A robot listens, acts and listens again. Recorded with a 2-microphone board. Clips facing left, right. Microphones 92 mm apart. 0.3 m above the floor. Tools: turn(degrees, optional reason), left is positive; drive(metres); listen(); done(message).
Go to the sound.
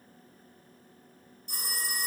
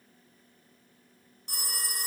turn(degrees=-75, reason="The phone ringing: about 75° right or 105° right.")
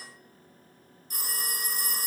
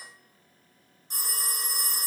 turn(degrees=-25, reason="So it is at 25° right.")
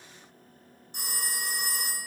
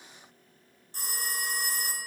turn(degrees=15, reason="The phone ringing is now 15° left.")
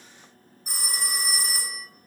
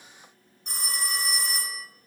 turn(degrees=10, reason="The phone ringing is now 10° left.")
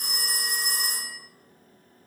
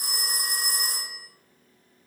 drive(metres=1.0)
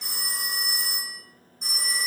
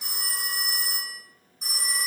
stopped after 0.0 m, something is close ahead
done("Something is in my way. I am facing the phone ringing but have not reached it.")